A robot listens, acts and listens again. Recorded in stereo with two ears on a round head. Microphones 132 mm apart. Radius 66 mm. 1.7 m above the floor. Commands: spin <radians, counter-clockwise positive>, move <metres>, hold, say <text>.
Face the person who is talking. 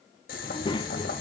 spin 0.52
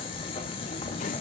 spin 2.01
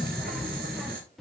say Found it: a child speaking, straight ahead.